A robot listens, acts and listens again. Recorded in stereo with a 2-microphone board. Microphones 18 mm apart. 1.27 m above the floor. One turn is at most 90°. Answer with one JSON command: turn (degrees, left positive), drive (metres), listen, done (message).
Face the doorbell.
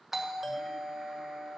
{"turn": -20}
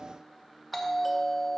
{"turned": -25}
{"done": "Facing the doorbell, 1 to 2 m away."}